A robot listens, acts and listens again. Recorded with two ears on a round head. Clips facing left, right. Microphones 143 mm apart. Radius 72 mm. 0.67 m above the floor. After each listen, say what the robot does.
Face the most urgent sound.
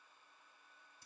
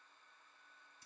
Keep listening.
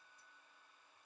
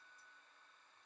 Keep listening.
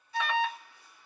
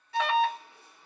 Turn 50° right.
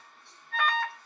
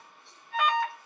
Found it: an alarm, straight ahead, under 1 m away.